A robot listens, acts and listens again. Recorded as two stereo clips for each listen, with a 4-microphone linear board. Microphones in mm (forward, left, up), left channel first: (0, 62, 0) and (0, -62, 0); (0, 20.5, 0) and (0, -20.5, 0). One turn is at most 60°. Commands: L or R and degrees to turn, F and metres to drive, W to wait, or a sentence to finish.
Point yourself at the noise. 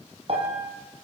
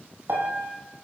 R50
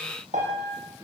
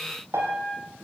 R60
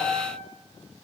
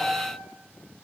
R20
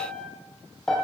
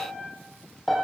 Facing the piano, over 4 m away.